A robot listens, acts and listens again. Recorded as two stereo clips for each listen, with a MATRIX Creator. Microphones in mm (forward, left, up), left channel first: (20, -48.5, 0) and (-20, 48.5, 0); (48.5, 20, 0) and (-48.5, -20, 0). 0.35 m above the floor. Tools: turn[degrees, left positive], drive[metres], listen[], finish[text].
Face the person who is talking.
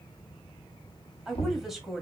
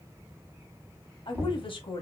Thought: The woman speaking: 25° left.
Action: turn[25]
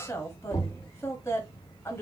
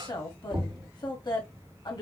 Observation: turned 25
Thought: The woman speaking is now 10° right.
Action: turn[-10]
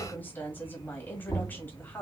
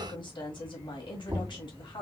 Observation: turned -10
Action: finish[Found it: a woman speaking, straight ahead, 1 to 2 m away.]